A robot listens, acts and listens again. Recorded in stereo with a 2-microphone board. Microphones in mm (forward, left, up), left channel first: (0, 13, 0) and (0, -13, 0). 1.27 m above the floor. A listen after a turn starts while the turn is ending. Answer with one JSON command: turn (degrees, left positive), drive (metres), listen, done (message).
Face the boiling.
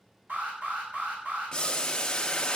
{"turn": 30}
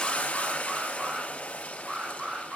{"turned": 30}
{"turn": 120}
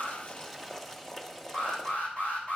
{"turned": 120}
{"turn": 10}
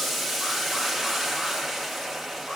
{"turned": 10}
{"done": "Found it: boiling, straight ahead, 1 to 2 m away."}